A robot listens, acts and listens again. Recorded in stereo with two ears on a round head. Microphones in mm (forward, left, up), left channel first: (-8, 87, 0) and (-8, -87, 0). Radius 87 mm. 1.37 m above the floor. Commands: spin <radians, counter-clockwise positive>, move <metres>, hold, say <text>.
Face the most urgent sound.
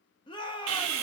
spin 0.44
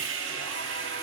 hold
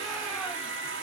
hold
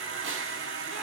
say I heard a shout, but can't make it out now. It was about straight ahead or 130° left.